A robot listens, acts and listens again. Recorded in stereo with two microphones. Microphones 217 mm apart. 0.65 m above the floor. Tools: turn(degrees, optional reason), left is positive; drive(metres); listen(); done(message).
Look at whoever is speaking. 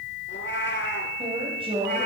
turn(degrees=-25, reason="The woman speaking: about 25° right or 155° right.")
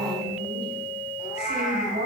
turn(degrees=-125, reason="So it is at 125° right.")
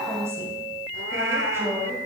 turn(degrees=-10, reason="The woman speaking is now 10° right.")
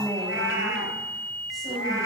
done("Facing the woman speaking, 2 to 4 m away.")